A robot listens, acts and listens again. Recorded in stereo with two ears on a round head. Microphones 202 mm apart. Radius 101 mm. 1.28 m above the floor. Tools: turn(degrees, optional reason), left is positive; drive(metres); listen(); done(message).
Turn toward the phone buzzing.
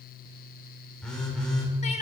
turn(degrees=30)
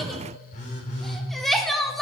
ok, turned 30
turn(degrees=145, reason="So it is at 145° left.")
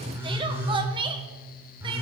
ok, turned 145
turn(degrees=-10, reason="The phone buzzing is now 10° right.")
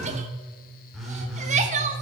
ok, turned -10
done("Found it: a phone buzzing, straight ahead.")